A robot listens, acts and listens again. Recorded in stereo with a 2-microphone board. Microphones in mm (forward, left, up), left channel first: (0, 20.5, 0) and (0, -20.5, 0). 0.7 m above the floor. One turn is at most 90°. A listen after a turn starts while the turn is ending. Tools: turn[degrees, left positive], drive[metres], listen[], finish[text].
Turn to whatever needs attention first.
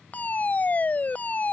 Thought: The fire alarm: about 40° left or 140° left.
Action: turn[40]
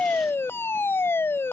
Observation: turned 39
Thought: So it is at 95° left.
Action: turn[90]
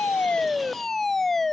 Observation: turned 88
Action: finish[Found it: a fire alarm, straight ahead.]